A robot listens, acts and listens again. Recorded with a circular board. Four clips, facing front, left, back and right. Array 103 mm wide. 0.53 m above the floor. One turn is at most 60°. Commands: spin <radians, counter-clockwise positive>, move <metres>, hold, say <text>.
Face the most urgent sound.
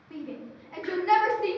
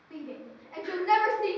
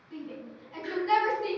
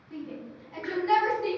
spin 0.52
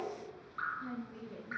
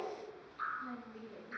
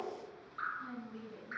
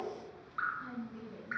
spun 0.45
hold
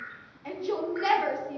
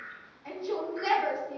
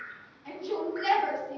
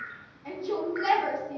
say Found it: a shout, straight ahead, 1 to 2 m away.